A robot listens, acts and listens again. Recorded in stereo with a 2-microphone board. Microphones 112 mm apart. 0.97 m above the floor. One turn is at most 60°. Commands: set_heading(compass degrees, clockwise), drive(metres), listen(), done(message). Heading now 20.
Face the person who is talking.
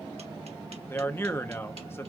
set_heading(355)
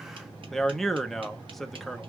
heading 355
done("Facing the man speaking.")